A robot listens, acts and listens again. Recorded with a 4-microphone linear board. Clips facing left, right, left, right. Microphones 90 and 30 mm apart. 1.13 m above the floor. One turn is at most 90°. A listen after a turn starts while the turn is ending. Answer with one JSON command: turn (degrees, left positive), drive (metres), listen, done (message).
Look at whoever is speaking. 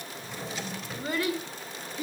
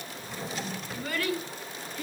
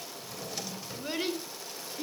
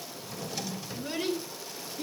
{"turn": 15}
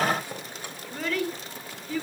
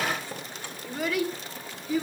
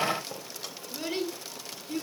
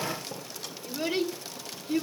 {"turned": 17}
{"turn": -15}
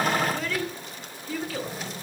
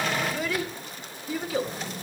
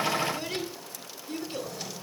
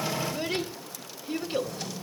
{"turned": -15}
{"turn": -15}
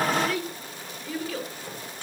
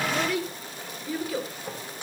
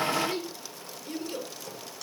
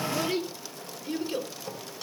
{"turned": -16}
{"turn": -10}
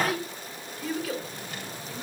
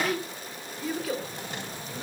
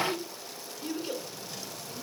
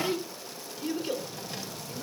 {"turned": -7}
{"done": "Found it: a child speaking, straight ahead, 2 to 4 m away."}